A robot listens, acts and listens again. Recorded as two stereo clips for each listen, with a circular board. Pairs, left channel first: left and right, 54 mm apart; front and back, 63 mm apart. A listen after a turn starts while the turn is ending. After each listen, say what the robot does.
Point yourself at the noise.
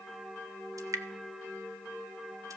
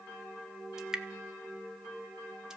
Turn 100° right.
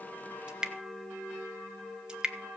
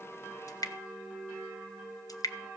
Turn 15° right.
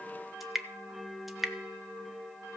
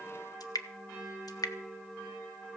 Found it: dripping, straight ahead.